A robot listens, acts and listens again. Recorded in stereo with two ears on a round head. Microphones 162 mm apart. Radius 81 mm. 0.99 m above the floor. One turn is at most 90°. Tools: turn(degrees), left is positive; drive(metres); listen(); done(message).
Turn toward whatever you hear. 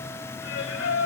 turn(degrees=90)
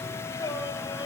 turn(degrees=25)
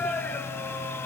turn(degrees=10)
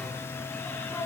turn(degrees=10)
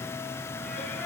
listen()
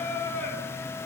turn(degrees=10)
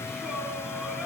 listen()
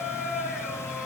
done("Facing the singing.")